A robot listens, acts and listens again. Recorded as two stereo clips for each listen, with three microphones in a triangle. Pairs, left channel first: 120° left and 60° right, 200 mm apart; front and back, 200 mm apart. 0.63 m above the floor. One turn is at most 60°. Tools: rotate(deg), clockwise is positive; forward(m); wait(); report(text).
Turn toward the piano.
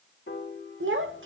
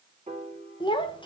rotate(-60)
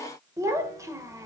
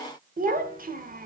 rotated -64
rotate(-60)
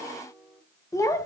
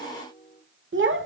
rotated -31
rotate(-25)
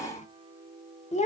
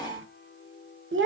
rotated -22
report("Facing the piano, 1 to 2 m away.")